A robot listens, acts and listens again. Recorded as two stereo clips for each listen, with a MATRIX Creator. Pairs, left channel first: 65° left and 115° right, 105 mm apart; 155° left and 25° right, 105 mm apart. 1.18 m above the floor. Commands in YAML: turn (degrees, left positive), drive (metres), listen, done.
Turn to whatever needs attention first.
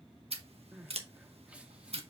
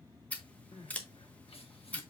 turn: 170
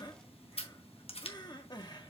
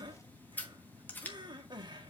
turn: 20
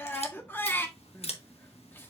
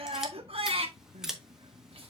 done: "Facing the crying, 1 to 2 m away."